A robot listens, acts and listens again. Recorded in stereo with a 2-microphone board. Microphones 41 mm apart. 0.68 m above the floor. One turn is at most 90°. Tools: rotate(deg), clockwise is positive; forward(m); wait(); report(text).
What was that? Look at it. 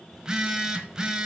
rotate(20)
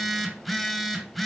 report("Found it: a phone buzzing, straight ahead, 1 to 2 m away.")